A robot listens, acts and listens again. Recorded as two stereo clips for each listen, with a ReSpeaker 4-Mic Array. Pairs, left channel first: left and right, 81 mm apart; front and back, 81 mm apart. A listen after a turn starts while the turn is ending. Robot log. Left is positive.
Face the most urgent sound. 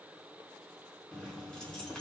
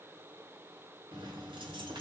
cmd idle
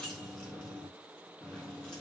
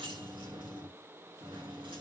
cmd idle
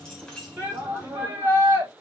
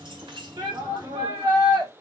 note: The shout: 155° right.
cmd yaw -155
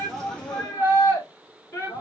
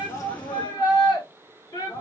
note: The shout is now 25° left.
cmd yaw +25
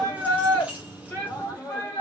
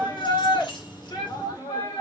note: The shout is now 20° left.
cmd yaw +20
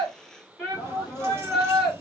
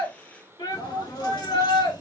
end: Facing the shout.